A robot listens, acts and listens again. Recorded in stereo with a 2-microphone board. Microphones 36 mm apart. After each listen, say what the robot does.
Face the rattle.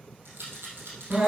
Turn 90° right.
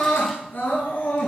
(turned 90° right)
Keep listening.
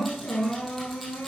Keep listening.
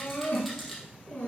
Found it: a rattle, straight ahead, 2 to 4 m away.